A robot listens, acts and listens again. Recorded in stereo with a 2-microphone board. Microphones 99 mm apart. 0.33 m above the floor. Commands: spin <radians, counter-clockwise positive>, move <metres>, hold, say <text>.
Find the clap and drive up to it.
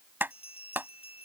spin -0.35
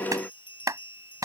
spin -2.36
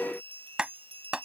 spin -0.17
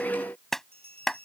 move 1.0
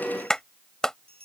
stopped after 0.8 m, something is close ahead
spin 0.17
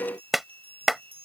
say Arrived at the clap, straight ahead.